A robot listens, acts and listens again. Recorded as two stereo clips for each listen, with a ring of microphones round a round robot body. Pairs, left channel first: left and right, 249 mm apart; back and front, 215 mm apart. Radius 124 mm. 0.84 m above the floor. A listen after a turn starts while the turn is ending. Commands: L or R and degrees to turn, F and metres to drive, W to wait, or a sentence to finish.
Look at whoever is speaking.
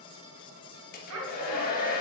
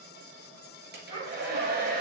R70
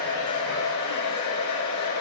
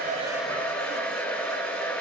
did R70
W
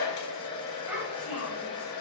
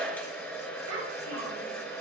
R10
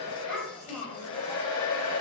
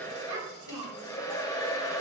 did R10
Found it: a child speaking, straight ahead.